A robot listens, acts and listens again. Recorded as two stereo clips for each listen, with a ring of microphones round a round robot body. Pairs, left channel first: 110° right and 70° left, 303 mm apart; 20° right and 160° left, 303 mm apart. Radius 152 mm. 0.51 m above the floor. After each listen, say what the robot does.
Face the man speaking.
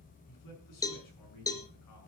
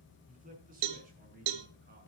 Turn 140° right.
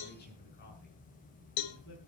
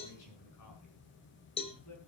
Turn 60° right.
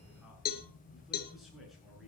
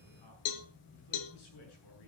Turn 20° right.
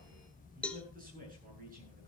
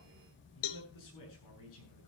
Found it: a man speaking, straight ahead.